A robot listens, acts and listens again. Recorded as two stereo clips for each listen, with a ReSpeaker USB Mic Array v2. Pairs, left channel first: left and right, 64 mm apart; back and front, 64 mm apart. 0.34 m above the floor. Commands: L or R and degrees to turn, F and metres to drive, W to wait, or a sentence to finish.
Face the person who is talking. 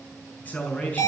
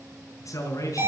L155
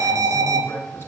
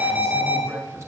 L40
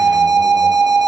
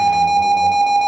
W
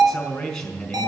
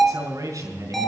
L10
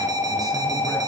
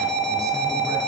W
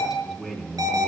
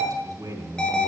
Facing the man speaking, over 4 m away.